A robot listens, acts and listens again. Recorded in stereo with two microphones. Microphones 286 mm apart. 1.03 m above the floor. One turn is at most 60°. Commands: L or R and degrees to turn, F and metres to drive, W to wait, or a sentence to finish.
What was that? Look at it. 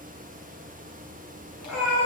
L60
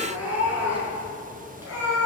R10
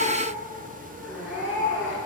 Found it: a cat meowing, straight ahead.